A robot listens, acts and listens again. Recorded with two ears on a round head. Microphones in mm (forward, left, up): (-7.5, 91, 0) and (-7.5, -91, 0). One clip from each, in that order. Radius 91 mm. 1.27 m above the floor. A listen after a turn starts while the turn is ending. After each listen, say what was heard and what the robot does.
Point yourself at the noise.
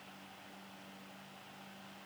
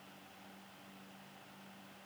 Keep listening.
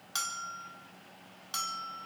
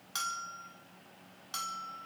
Turn 30° left.
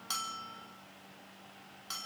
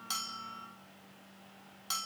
So it is at 25° right. Turn 25° right.
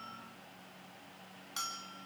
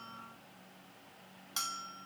The bell is now 20° right. Turn 20° right.
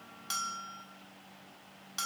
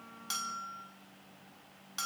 Facing the bell, 2 to 4 m away.